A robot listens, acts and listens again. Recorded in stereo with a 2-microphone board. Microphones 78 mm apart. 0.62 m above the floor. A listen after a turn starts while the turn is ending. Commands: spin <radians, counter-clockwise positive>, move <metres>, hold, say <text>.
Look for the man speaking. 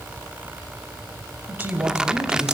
spin -0.52
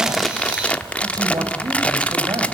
spin -1.92
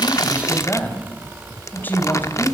spin 0.44
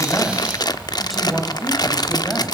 say Facing the man speaking.